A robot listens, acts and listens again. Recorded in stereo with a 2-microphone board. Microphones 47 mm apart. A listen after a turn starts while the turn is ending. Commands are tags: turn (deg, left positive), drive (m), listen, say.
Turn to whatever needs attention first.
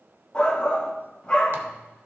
<turn deg="20"/>
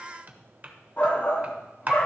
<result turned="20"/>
<turn deg="140"/>
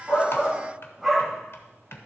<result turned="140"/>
<turn deg="-10"/>
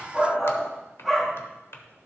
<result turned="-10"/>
<say>Facing the shout, 1 to 2 m away.</say>